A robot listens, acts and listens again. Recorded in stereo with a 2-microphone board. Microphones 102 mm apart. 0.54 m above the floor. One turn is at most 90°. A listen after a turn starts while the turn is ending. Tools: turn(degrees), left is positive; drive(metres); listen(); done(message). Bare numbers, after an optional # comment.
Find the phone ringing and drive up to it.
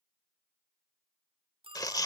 # The phone ringing: about 60° right or 120° right.
turn(-60)
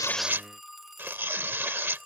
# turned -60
drive(1.0)
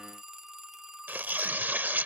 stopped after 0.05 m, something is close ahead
done("Something is in my way. I am facing the phone ringing but have not reached it.")